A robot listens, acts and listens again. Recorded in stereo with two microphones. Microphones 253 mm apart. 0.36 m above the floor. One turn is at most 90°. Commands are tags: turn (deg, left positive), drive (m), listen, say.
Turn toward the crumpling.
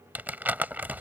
<turn deg="-30"/>
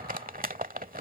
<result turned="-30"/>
<turn deg="-90"/>
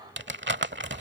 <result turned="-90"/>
<turn deg="-55"/>
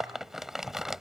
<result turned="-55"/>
<say>Found it: crumpling, straight ahead.</say>